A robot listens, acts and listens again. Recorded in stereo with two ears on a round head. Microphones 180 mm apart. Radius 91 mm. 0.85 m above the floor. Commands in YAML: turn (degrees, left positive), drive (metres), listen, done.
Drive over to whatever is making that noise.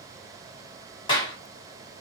turn: 25
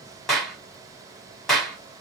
drive: 1.0
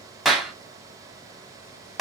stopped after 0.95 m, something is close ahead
done: "Arrived at the clap, straight ahead."